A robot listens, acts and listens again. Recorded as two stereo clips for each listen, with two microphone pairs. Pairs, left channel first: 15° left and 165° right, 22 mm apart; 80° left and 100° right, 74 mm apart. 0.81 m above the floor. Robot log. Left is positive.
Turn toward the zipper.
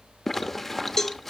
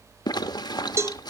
note: The zipper: 95° left.
cmd yaw +95
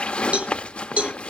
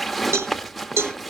note: The zipper is now 10° right.
cmd yaw -10
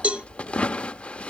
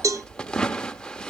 end: Found it: a zipper, straight ahead.